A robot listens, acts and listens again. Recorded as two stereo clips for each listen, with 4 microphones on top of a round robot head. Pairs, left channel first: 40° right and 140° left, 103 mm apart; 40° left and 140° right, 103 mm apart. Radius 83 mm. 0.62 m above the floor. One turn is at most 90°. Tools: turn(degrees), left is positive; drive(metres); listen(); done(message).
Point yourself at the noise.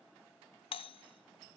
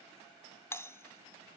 turn(degrees=-25)
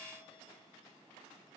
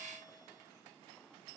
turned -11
turn(degrees=-10)
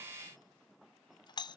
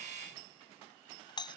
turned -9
done("Facing the doorbell.")